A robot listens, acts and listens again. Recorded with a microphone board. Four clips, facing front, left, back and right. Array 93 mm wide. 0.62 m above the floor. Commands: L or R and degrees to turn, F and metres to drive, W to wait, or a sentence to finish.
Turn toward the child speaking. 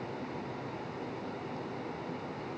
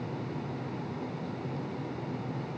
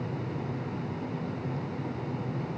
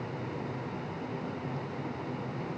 W
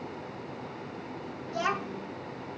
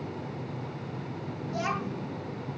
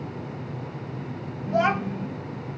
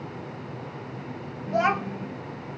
R135
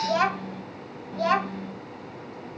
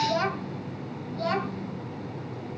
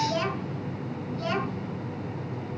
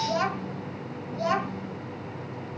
R15
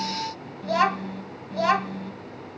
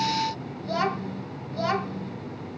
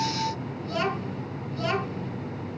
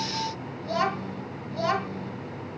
Found it: a child speaking, straight ahead.